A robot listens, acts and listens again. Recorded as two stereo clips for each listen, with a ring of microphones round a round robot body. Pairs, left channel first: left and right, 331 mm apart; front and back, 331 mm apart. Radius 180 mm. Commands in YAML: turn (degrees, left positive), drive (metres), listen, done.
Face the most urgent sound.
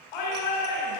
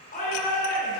turn: 70
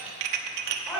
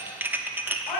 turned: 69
done: "Found it: a shout, straight ahead."